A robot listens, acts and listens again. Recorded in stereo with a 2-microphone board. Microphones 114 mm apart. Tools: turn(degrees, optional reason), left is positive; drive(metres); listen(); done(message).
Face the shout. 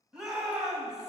turn(degrees=-30)
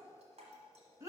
turn(degrees=-145, reason="So it is at 145° right.")
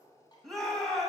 done("Found it: a shout, straight ahead.")